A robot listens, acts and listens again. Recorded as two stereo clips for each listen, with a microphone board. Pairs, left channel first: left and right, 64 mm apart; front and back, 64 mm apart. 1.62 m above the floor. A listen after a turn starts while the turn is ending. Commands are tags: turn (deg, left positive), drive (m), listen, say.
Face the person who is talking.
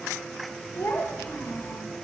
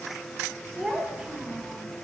<turn deg="110"/>
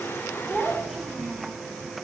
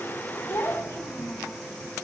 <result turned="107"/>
<say>Found it: a child speaking, straight ahead.</say>